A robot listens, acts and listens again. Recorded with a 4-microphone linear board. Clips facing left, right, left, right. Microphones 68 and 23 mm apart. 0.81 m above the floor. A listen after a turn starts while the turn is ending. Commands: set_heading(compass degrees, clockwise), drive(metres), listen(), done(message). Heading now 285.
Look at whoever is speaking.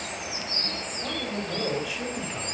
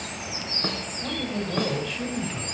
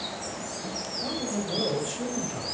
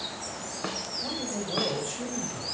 set_heading(255)
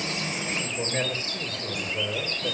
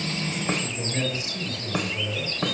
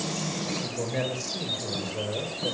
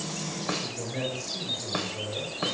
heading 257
set_heading(107)
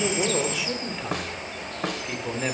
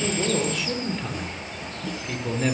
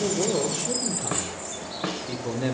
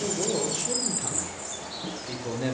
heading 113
done("Facing the man speaking.")